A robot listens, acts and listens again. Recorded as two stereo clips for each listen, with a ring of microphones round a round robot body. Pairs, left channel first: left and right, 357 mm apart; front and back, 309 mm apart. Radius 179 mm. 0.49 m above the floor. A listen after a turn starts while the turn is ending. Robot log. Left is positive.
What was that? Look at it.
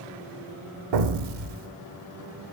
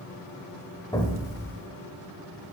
note: The explosion: 80° right.
cmd yaw -80
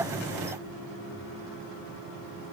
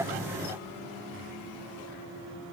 end: Facing where the explosion came from. I can't hear it now.